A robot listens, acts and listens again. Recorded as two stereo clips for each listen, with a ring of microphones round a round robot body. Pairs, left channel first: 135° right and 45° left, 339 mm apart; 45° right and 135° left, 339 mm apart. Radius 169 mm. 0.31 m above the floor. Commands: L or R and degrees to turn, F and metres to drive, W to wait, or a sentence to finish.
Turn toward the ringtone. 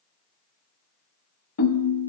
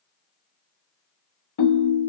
R85
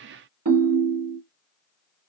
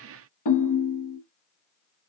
Facing the ringtone.